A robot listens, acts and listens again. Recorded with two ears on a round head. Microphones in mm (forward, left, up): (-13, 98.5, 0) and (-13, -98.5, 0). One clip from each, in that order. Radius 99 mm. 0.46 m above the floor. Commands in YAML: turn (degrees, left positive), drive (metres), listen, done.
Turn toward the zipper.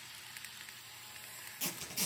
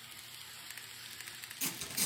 turn: -30
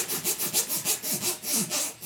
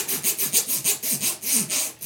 turn: -145
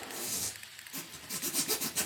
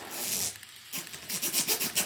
turn: -35
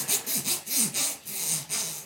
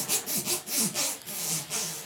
turn: 20
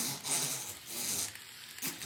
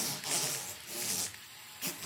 done: "Facing the zipper."